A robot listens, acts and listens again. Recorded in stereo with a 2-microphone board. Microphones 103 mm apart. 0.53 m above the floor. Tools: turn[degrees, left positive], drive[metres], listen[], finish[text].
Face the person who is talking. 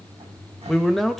Action: turn[30]
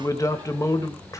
Thought: So it is at 145° left.
Action: turn[145]
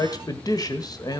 Thought: The man speaking is now 40° left.
Action: turn[40]
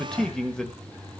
Action: finish[Facing the man speaking.]